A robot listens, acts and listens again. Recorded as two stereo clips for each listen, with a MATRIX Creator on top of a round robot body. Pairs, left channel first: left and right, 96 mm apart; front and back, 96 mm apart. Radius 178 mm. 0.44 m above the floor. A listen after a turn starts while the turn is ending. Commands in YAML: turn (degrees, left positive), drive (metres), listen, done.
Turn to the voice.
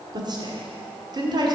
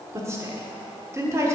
turn: -125
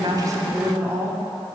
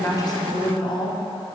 turn: -25
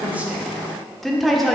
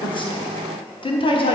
done: "Found it: a woman speaking, straight ahead, 1 to 2 m away."